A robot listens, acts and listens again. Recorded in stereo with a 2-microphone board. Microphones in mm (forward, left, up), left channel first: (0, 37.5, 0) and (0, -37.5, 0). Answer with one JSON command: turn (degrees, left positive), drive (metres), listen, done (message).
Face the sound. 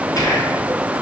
{"turn": 50}
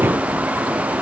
{"listen": true}
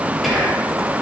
{"done": "Found it: whispering, straight ahead, 2 to 4 m away."}